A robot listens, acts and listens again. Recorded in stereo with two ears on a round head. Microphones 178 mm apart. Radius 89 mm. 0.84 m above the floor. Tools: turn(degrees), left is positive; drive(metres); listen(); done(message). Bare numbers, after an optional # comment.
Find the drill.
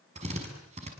# The drill: about 35° right or 145° right.
turn(-35)
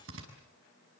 # So it is at 110° right.
turn(-110)
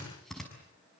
done("Facing the drill.")